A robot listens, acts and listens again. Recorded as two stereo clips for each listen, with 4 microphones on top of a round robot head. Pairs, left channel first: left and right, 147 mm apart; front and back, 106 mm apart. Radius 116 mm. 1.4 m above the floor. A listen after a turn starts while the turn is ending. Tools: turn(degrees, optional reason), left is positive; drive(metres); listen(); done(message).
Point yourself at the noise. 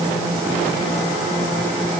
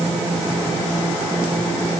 listen()
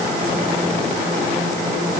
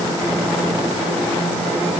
listen()
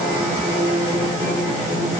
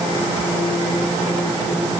done("I can't make out anything to turn to.")